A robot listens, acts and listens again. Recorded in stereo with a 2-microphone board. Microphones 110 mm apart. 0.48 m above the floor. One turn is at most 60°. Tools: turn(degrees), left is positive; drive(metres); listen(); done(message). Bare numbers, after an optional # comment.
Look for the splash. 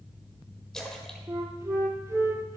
turn(30)
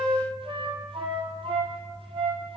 listen()
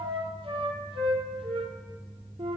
done("I heard a splash, but can't make it out now. It was about 25° right or 145° left.")